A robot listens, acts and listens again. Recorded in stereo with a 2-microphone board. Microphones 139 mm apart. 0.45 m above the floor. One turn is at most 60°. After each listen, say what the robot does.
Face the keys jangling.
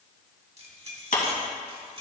Turn 40° right.
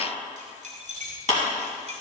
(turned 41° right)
Turn 60° right.
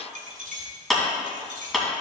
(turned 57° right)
Turn 60° right.
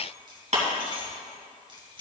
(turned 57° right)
Turn 35° right.
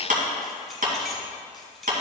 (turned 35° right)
Found it: keys jangling, straight ahead.